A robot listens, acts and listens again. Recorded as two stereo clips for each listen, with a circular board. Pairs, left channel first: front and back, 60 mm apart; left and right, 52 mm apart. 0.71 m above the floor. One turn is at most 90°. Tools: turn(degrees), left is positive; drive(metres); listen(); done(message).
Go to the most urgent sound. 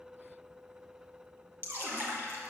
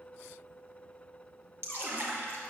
listen()
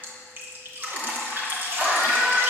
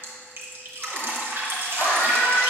turn(degrees=90)
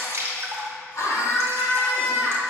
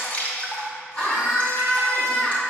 turn(degrees=30)
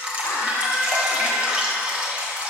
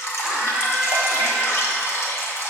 drive(metres=1.0)
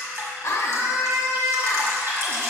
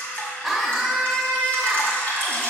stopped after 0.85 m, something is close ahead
done("I am next to the scream.")